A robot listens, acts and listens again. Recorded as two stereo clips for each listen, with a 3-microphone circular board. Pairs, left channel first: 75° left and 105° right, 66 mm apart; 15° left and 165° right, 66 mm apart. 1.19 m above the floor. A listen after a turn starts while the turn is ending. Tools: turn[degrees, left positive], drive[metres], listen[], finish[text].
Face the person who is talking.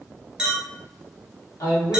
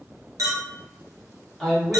Thought: The man speaking: 95° left.
Action: turn[95]
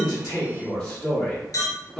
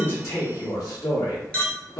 Action: finish[Facing the man speaking.]